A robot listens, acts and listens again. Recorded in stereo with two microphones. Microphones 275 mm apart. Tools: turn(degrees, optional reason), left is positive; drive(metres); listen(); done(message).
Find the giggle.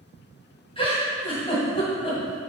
turn(degrees=20, reason="The giggle: about 20° left or 160° left.")
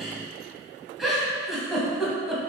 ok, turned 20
done("Facing the giggle.")